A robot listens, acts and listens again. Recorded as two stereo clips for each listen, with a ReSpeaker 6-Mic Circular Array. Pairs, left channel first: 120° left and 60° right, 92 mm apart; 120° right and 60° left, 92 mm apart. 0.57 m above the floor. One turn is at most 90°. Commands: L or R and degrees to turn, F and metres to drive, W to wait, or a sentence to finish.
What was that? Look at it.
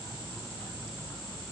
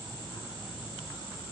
W
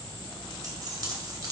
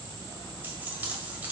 R10
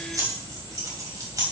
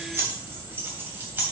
R10
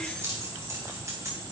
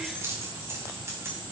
Facing the keys jangling, 2 to 4 m away.